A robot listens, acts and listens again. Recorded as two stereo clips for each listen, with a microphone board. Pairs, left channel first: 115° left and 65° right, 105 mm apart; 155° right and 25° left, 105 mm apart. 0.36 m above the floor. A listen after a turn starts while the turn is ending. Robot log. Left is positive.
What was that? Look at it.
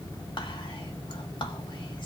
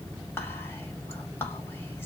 note: The whispering: 140° left.
cmd yaw +140
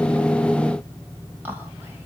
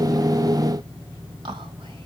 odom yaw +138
end: Found it: whispering, straight ahead.